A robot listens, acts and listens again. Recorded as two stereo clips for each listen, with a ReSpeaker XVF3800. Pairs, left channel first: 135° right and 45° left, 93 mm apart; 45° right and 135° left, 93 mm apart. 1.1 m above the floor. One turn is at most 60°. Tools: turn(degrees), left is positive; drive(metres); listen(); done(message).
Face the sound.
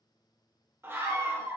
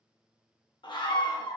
turn(degrees=-20)
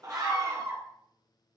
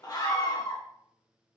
done("Found it: a scream, straight ahead.")